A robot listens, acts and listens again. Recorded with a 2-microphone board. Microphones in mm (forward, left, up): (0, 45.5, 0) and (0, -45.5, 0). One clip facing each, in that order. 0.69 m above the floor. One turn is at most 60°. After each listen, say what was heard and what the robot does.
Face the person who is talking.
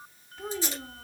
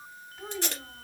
Turn 30° left.
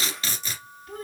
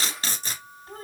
So it is at 30° right. Turn 30° right.
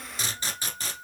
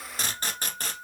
Keep listening.
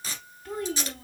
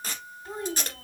The child speaking is now 20° right. Turn 20° right.
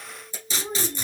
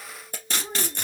Found it: a child speaking, straight ahead.